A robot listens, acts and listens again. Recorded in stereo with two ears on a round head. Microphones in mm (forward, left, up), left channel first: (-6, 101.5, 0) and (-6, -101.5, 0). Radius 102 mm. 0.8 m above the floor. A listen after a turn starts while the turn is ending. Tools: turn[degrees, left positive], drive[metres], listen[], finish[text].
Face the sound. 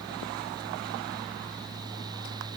Action: listen[]
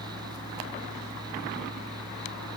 Action: listen[]
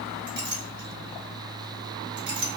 Thought: The clink: about 50° right or 130° right.
Action: turn[-50]
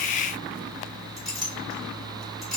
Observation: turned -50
Action: finish[Facing the clink.]